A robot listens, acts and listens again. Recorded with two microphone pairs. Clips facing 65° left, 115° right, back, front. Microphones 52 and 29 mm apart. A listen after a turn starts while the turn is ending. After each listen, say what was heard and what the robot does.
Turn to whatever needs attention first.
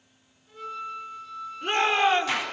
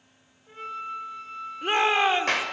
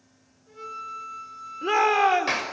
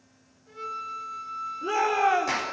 The shout: 165° left. Turn 165° left.
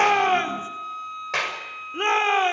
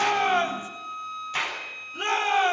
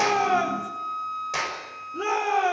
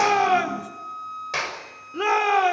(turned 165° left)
The shout is now 10° left. Turn 10° left.
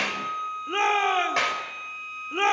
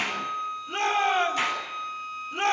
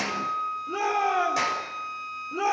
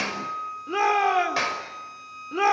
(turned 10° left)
Facing the shout, over 4 m away.